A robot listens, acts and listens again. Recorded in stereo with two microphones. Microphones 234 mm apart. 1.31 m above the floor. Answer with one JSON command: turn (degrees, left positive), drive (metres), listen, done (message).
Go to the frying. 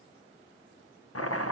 {"listen": true}
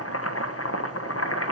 {"listen": true}
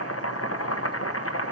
{"done": "I can't make out frying to turn to."}